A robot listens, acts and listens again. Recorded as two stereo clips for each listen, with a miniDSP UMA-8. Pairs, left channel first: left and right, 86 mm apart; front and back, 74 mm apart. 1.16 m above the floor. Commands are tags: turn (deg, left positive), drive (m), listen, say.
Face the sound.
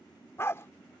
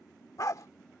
<turn deg="35"/>
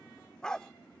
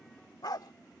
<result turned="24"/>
<turn deg="10"/>
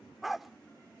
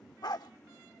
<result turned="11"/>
<say>Found it: a dog barking, straight ahead.</say>